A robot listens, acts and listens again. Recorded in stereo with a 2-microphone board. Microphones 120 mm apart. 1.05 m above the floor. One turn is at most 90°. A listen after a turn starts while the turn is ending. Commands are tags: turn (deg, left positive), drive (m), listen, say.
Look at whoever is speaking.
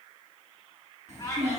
<turn deg="-65"/>
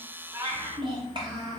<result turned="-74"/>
<turn deg="-40"/>
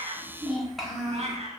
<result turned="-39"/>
<say>Found it: a child speaking, straight ahead, 1 to 2 m away.</say>